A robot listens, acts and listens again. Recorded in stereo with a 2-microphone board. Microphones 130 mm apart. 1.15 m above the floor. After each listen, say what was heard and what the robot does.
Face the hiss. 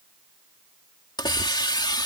The hiss: about 35° left or 145° left. Turn 35° left.
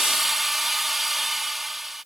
Found it: a hiss, straight ahead.